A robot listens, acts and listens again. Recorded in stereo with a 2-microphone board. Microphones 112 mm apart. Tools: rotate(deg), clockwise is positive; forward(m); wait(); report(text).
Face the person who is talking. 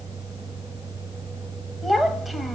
rotate(-30)
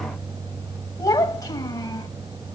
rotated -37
rotate(-145)
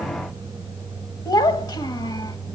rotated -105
rotate(-40)
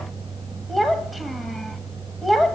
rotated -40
report("Found it: a child speaking, straight ahead.")